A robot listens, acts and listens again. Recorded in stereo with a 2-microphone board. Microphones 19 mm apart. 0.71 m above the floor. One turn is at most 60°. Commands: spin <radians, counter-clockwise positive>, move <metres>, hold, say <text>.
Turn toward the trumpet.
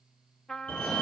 spin 0.61
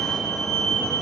hold
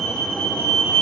hold
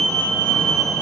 say I heard a trumpet, but can't make it out now. It was about straight ahead or 110° left.